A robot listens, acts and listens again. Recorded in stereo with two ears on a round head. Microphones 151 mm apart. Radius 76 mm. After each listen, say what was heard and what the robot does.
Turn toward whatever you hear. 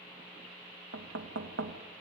Turn 90° right.
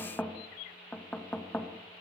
So it is at 10° left. Turn 10° left.
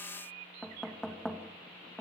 Found it: knocking, straight ahead, 1 to 2 m away.